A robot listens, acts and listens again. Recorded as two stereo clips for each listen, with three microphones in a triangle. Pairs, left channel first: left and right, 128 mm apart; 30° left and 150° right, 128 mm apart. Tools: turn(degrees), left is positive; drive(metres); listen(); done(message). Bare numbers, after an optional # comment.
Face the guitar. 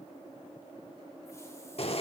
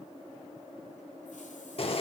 listen()
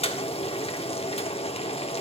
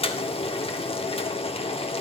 listen()
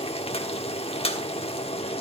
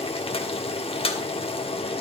done("I can't make out a guitar to turn to.")